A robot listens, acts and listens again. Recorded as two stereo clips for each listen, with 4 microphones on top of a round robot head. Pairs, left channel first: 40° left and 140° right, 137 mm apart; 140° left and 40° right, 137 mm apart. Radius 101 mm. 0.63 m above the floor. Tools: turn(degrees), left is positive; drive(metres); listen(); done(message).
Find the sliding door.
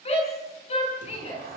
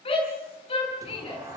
turn(degrees=-110)
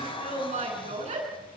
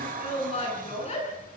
turn(degrees=-15)
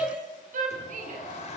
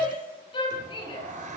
done("Facing the sliding door, 2 to 4 m away.")